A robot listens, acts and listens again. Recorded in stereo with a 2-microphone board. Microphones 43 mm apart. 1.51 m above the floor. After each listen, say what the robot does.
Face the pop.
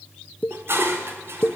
Turn 40° left.
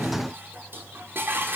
Keep listening.
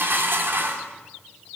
I heard a pop, but can't make it out now. It was about straight ahead or 100° left.